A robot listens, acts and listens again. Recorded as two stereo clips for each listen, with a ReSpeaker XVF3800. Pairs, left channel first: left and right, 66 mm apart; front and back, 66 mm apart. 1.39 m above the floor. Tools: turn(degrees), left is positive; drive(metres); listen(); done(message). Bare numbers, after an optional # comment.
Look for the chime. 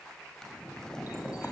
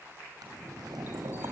listen()
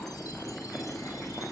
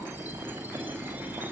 listen()
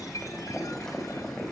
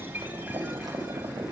done("I can't make out a chime to turn to.")